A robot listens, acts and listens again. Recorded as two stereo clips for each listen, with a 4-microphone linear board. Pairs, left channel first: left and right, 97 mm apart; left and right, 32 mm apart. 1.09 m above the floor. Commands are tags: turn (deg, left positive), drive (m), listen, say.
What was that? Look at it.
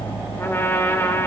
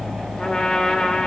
<turn deg="25"/>
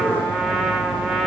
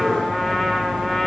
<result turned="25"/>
<say>Found it: a trumpet, straight ahead, 2 to 4 m away.</say>